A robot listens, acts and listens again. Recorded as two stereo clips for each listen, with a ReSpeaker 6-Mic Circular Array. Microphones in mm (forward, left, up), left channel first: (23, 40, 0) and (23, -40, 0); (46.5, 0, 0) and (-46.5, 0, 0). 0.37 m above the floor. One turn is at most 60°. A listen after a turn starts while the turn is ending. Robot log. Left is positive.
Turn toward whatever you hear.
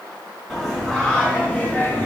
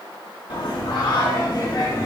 note: The singing: 35° left.
cmd yaw +35
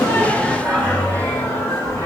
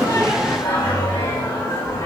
note: The singing is now 50° left.
cmd yaw +50
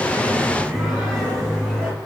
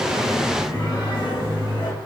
note: The singing is now 15° left.
cmd yaw +15
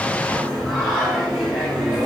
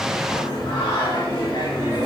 end: Facing the singing.